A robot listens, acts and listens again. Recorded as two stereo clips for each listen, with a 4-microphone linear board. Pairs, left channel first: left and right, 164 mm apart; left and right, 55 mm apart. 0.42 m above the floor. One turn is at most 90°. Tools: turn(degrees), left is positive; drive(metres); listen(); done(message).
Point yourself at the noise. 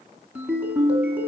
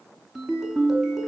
turn(degrees=-30)
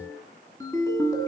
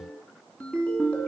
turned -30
turn(degrees=20)
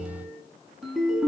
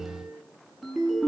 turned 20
done("Facing the ringtone.")